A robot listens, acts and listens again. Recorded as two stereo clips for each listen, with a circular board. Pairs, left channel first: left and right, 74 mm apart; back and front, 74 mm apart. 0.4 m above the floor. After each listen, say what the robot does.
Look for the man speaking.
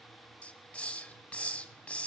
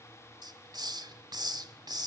Keep listening.
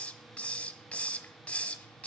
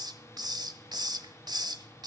Keep listening.
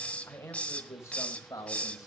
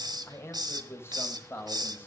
Turn 130° left.
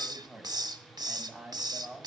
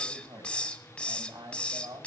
Turn 10° right.
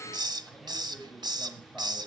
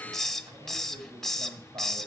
Keep listening.
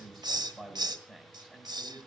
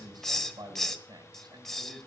Facing the man speaking, 2 to 4 m away.